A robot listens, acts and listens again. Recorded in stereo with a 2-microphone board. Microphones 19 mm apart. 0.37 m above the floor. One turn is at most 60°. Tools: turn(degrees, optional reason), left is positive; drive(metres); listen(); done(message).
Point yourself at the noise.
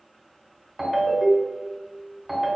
turn(degrees=-30)
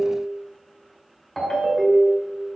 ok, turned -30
turn(degrees=20, reason="So it is at 20° left.")
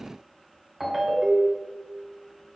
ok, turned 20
turn(degrees=-10, reason="The ringtone is now 10° right.")
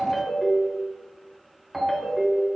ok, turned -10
done("Facing the ringtone, 1 to 2 m away.")